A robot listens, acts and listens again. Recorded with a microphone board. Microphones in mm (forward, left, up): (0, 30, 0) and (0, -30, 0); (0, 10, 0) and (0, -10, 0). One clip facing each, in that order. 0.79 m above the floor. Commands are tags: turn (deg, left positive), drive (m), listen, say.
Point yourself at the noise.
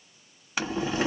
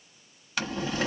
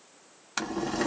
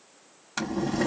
<turn deg="20"/>
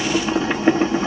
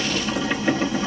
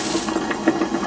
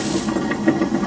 <turn deg="140"/>
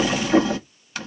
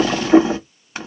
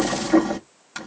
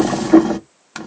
<turn deg="-30"/>
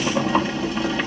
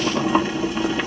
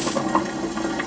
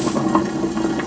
<turn deg="-10"/>
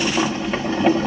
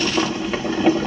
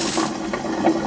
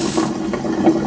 <say>Found it: boiling, straight ahead.</say>